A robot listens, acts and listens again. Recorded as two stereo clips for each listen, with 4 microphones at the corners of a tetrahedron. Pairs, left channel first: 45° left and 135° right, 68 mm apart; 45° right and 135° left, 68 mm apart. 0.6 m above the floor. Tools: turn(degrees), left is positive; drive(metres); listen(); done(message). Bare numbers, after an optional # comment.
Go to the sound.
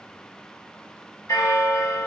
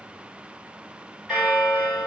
# The bell: 55° left.
turn(55)
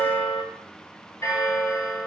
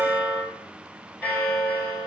# The bell is now 15° left.
turn(15)
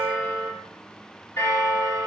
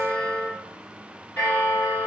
drive(1.0)
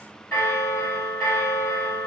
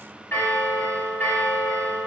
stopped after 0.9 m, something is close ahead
done("I am next to the bell.")